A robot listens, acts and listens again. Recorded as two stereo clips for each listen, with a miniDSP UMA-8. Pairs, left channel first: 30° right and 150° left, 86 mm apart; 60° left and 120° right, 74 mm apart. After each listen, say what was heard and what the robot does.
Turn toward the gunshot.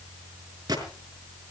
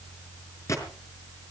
The gunshot: 105° left. Turn 105° left.
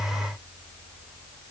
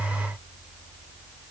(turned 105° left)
I heard a gunshot from this way, but can't make it out now.